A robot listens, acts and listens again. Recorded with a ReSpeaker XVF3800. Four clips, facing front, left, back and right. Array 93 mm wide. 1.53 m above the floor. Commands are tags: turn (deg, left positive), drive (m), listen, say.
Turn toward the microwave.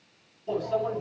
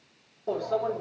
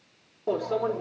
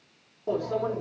<turn deg="-175"/>
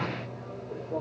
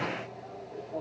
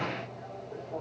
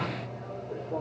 <turn deg="-50"/>
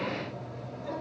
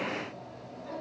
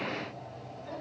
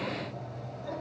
<say>Found it: a microwave, straight ahead, over 4 m away.</say>